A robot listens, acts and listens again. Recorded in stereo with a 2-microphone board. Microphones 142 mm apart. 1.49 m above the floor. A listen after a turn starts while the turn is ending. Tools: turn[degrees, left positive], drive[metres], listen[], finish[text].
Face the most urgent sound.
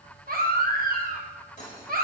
Thought: The baby crying: about 70° right or 110° right.
Action: turn[-70]
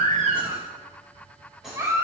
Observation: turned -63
Thought: So it is at 20° right.
Action: turn[-20]
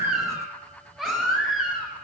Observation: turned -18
Action: finish[Facing the baby crying.]